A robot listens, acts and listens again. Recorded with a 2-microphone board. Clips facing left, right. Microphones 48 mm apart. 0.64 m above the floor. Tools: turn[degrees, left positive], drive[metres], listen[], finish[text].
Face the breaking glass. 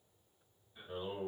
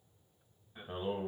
Action: listen[]
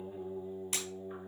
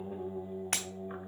Action: turn[-90]
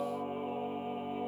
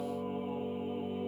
Action: finish[I heard breaking glass from this way, but can't make it out now.]